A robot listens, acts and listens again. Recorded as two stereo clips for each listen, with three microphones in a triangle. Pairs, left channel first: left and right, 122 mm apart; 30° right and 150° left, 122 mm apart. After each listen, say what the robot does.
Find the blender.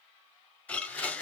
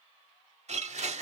Turn 165° left.
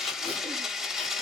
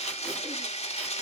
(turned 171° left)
Facing the blender, under 1 m away.